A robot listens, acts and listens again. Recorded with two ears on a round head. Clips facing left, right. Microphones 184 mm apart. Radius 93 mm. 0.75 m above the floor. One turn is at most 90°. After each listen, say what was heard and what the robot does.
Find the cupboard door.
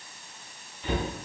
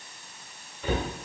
The cupboard door: about 55° right or 125° right. Turn 55° right.
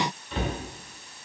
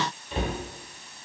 Facing the cupboard door.